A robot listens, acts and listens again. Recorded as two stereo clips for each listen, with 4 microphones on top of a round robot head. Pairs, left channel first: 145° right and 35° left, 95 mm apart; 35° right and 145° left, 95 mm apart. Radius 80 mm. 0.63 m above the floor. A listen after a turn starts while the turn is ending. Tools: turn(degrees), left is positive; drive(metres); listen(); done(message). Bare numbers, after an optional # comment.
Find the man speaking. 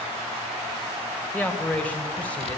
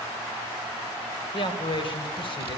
# The man speaking: 70° right.
turn(-70)
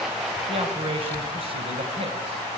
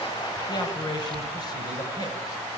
# The man speaking is now 15° left.
turn(15)
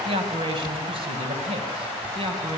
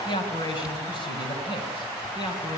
done("Found it: a man speaking, straight ahead.")